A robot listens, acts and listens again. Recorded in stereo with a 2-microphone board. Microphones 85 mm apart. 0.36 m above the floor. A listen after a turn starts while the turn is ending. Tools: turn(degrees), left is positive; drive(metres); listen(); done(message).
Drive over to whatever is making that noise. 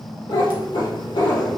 turn(degrees=90)
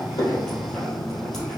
listen()
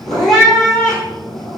drive(metres=1.0)
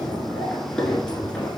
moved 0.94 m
turn(degrees=10)
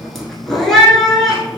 drive(metres=1.0)
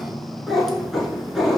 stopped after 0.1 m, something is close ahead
done("I am next to the cat meowing.")